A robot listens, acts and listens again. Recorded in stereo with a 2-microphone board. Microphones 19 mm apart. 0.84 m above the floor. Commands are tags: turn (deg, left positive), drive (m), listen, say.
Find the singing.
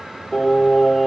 <turn deg="30"/>
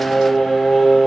<turn deg="145"/>
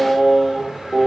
<turn deg="10"/>
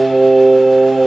<say>Found it: singing, straight ahead, over 4 m away.</say>